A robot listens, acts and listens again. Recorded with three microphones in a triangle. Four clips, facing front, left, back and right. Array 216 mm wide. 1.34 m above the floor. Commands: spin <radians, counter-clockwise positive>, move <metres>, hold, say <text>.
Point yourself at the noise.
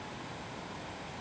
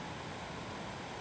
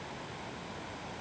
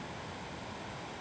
hold
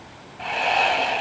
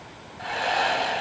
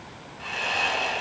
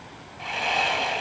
spin 0.26
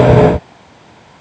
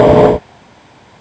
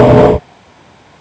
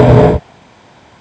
hold
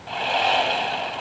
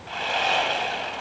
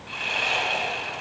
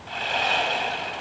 say Found it: sawing, straight ahead.